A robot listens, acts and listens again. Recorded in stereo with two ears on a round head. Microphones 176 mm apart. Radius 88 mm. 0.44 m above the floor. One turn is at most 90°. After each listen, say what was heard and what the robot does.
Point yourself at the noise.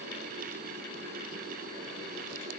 Keep listening.
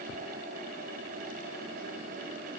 Keep listening.
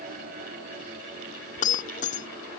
The breaking glass: about 45° left or 135° left. Turn 45° left.
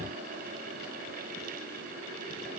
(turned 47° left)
Keep listening.
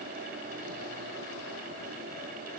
I heard breaking glass, but can't make it out now. It was about 5° right or 90° left.